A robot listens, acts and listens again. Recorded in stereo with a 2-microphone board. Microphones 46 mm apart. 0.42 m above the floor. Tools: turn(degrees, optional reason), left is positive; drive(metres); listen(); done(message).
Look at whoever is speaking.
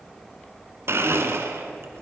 listen()
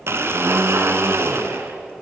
listen()
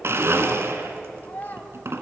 turn(degrees=40, reason="The child speaking: about 40° left or 140° left.")
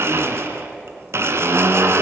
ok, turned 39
listen()
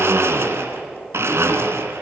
listen()
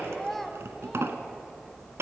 done("Facing the child speaking.")